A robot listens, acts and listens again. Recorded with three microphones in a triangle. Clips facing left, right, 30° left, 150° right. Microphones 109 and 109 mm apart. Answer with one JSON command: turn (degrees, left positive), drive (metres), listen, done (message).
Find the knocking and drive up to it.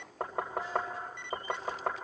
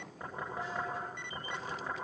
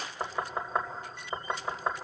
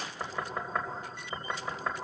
{"turn": 95}
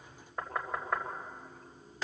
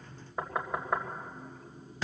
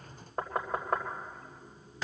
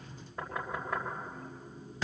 {"turn": -10}
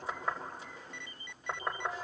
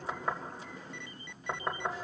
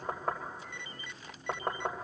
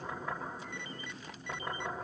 {"drive": 1.0}
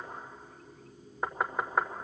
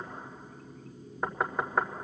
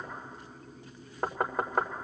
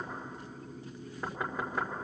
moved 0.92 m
{"drive": 1.0}
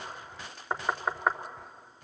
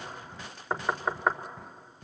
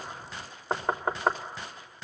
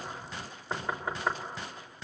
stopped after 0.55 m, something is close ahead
{"done": "Arrived at the knocking, straight ahead."}